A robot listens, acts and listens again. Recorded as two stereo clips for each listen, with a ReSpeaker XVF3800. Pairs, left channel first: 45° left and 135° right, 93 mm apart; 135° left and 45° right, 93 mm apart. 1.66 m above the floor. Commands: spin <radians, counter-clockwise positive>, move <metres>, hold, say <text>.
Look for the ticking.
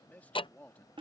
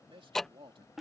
spin 0.79
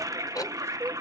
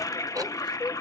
hold
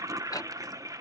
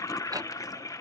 say Facing the ticking.